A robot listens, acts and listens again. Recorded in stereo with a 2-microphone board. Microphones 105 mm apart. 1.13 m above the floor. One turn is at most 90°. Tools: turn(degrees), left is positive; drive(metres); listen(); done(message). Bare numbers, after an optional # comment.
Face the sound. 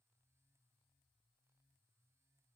listen()
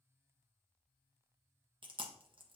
# The chewing: about 50° right or 130° right.
turn(-50)
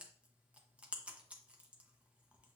# So it is at 15° right.
turn(-15)
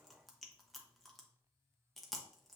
done("Found it: chewing, straight ahead, under 1 m away.")